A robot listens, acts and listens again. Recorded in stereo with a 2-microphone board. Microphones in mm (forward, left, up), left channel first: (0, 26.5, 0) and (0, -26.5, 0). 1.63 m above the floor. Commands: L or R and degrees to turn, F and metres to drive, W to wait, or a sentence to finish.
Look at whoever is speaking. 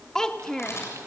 L30
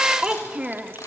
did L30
R15
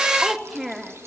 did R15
Found it: a child speaking, straight ahead, 1 to 2 m away.